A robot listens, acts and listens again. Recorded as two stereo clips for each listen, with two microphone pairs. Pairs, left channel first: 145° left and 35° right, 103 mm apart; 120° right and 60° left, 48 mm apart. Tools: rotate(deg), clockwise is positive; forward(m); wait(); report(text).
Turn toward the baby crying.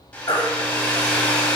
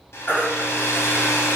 rotate(170)
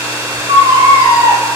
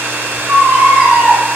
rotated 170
report("Facing the baby crying, 1 to 2 m away.")